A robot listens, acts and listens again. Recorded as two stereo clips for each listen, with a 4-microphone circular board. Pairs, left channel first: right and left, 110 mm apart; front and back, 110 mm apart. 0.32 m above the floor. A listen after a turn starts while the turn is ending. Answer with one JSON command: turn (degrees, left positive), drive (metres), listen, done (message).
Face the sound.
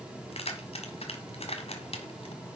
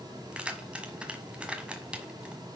{"turn": -100}
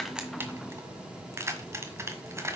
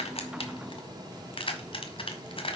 {"turn": 25}
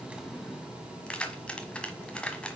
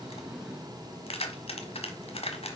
{"turn": -10}
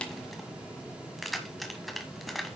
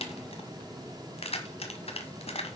{"done": "Found it: keys jangling, straight ahead, 1 to 2 m away."}